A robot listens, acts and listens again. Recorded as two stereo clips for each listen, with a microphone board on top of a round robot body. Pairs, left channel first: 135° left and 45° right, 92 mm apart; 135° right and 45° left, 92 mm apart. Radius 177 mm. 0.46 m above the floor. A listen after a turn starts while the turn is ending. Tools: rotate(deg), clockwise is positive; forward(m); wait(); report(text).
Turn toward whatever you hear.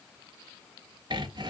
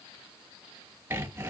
rotate(20)
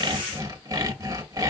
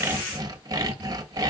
report("Found it: sawing, straight ahead.")